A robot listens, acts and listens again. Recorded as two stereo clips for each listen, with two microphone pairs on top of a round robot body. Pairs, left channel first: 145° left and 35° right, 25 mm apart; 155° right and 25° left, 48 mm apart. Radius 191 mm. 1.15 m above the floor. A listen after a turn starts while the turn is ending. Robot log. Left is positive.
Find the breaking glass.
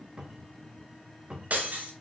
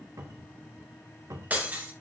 note: The breaking glass: 35° right.
cmd yaw -35
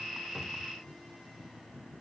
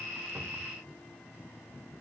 end: Facing where the breaking glass came from. I can't hear it now.